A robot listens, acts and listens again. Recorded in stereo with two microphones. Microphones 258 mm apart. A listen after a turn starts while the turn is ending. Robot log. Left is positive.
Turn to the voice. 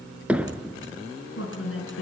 note: The woman speaking: about 55° left or 125° left.
cmd yaw +55
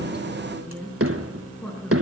end: Found it: a woman speaking, straight ahead, over 4 m away.